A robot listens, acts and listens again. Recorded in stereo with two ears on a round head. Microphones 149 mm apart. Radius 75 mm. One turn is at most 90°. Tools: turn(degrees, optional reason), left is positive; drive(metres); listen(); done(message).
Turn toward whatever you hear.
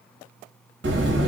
turn(degrees=-65, reason="The buzzer: about 65° right or 115° right.")
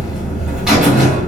done("Facing the buzzer.")